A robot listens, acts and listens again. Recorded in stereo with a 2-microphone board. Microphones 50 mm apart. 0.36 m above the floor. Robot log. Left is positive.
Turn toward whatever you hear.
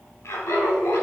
note: The laughter: about 65° left or 115° left.
cmd yaw +65
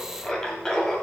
note: So it is at 10° left.
cmd yaw +10
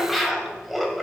end: Found it: laughter, straight ahead.